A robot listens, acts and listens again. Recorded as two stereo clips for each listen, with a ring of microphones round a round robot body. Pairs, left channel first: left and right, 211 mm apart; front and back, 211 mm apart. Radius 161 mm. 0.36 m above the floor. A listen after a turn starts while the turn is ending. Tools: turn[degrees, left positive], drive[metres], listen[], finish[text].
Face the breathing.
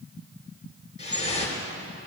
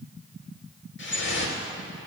Action: listen[]
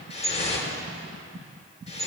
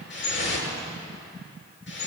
Action: listen[]
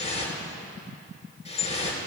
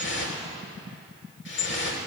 Action: finish[I can't make out breathing, only dripping.]